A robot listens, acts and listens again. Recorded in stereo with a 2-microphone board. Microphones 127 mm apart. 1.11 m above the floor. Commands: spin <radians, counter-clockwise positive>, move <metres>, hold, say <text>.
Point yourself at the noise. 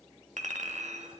spin -1.22
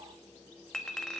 say Found it: a clink, straight ahead.